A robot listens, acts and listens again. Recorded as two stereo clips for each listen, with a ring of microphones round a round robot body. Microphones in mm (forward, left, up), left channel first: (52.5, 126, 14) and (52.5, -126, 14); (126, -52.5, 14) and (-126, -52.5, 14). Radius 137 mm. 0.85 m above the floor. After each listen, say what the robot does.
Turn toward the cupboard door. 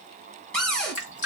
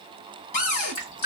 Facing the cupboard door.